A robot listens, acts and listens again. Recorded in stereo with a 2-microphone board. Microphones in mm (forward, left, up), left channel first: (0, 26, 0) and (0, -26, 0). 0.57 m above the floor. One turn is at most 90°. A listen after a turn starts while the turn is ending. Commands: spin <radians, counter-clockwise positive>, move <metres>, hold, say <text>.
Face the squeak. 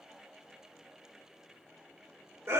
hold
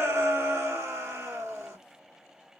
hold
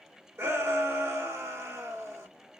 say I can't make out a squeak to turn to.